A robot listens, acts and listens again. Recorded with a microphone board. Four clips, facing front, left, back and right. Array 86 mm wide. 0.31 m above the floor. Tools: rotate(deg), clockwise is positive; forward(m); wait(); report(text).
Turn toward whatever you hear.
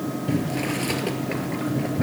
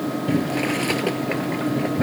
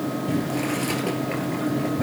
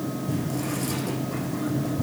rotate(-90)
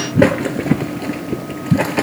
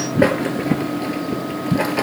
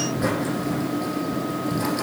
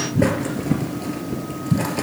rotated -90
rotate(-20)
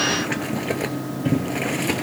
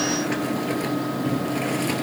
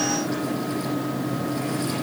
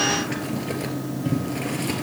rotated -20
report("Facing the boiling, 1 to 2 m away.")